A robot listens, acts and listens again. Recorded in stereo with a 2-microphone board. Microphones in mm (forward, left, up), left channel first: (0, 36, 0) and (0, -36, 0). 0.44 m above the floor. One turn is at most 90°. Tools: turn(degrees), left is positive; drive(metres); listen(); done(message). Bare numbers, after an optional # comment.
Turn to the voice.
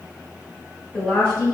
# The woman speaking: about 20° left or 160° left.
turn(20)
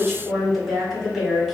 done("Found it: a woman speaking, straight ahead, 1 to 2 m away.")